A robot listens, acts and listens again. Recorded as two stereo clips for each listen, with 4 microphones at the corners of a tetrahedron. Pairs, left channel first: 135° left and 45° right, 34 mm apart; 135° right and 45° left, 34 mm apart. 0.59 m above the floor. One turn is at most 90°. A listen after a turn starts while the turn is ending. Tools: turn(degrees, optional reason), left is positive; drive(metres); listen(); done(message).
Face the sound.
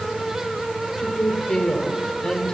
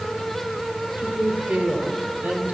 turn(degrees=70, reason="The woman speaking: 70° left.")
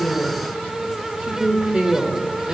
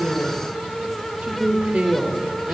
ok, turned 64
done("Facing the woman speaking, 1 to 2 m away.")